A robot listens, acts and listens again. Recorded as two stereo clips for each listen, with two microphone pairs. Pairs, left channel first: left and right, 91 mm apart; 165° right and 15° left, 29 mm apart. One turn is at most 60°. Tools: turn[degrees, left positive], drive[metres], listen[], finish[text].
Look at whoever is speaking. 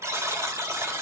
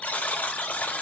Action: listen[]
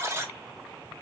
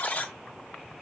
Action: listen[]
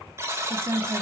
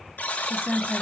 Thought: The woman speaking: 75° right.
Action: turn[-60]
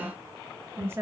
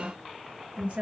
Thought: The woman speaking is now 25° right.
Action: turn[-25]
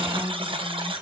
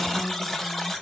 Action: listen[]
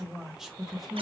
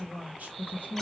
Action: finish[Facing the woman speaking, 1 to 2 m away.]